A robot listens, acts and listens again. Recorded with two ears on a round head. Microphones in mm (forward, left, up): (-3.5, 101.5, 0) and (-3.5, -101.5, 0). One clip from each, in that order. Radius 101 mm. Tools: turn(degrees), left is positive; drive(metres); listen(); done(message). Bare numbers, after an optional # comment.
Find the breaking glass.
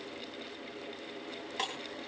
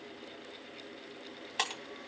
# The breaking glass: about 30° right or 150° right.
turn(-30)
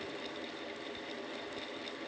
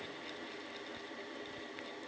listen()
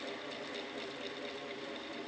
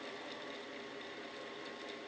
done("I heard breaking glass, but can't make it out now. It was about straight ahead or 120° right.")